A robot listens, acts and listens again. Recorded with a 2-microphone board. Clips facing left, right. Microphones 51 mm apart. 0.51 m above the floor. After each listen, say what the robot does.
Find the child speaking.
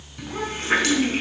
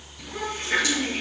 Turn 25° left.
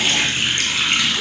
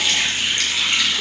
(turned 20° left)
Keep listening.
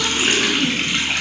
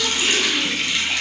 Keep listening.
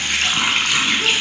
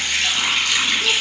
I heard a child speaking, but can't make it out now. It was about 5° left or 135° left.